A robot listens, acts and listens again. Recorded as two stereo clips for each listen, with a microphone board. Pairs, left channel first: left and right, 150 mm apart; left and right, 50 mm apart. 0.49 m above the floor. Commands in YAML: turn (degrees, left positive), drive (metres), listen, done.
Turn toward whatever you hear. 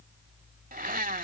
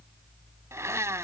turn: -70
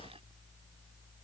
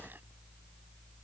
listen: true
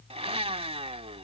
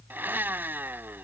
turn: -40
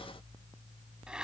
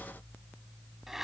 listen: true
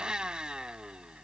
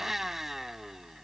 done: "Found it: a blender, straight ahead."